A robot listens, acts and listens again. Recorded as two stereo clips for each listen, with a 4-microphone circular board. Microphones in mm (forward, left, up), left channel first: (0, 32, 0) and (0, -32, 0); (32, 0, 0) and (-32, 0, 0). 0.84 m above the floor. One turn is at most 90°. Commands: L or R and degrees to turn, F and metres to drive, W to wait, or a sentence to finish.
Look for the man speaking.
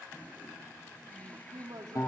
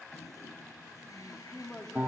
R80
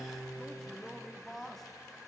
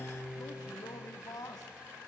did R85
Facing the man speaking, 1 to 2 m away.